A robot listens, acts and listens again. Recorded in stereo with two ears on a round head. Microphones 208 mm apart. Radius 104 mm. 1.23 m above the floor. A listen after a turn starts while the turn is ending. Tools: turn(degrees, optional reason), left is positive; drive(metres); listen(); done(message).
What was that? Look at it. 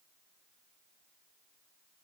listen()
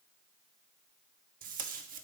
turn(degrees=-40, reason="The tape being pulled: about 40° right or 140° right.")
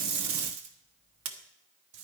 turn(degrees=-100, reason="So it is at 100° right.")
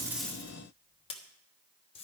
turn(degrees=25, reason="The tape being pulled is now 25° left.")
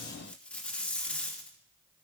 done("Facing the tape being pulled.")